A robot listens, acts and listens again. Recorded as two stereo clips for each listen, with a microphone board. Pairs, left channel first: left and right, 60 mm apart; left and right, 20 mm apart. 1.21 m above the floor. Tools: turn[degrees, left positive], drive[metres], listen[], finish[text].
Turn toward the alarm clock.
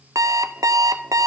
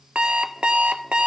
Thought: The alarm clock: about 65° right or 115° right.
Action: turn[-65]
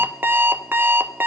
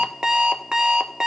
Thought: So it is at 40° right.
Action: turn[-40]
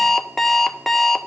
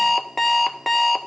Action: finish[Found it: an alarm clock, straight ahead, under 1 m away.]